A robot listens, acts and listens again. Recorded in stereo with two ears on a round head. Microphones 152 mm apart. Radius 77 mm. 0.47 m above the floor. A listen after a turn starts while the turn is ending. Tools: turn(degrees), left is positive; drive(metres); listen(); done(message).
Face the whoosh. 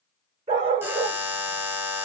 listen()
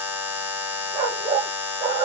listen()
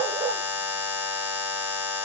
done("I can't make out a whoosh, only a dog barking and a buzzer.")